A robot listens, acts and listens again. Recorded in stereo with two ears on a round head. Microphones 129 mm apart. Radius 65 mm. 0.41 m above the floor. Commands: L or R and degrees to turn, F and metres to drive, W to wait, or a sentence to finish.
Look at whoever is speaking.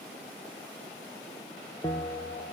W
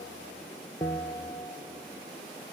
W
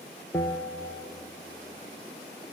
I can't make out anyone speaking to turn to.